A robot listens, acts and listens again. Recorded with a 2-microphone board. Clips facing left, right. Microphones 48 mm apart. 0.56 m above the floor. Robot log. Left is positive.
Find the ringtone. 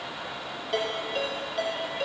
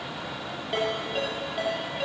cmd yaw -30
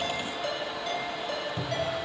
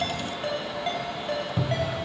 note: So it is at 145° right.
cmd yaw -145
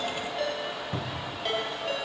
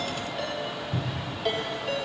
end: Found it: a ringtone, straight ahead.